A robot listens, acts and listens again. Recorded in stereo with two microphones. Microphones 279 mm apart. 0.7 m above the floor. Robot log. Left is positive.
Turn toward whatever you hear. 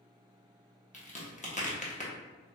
note: The crack: about 25° left or 155° left.
cmd yaw +25
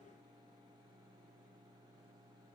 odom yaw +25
cmd idle
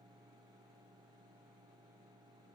end: I heard a crack, but can't make it out now. It was about straight ahead or 130° left.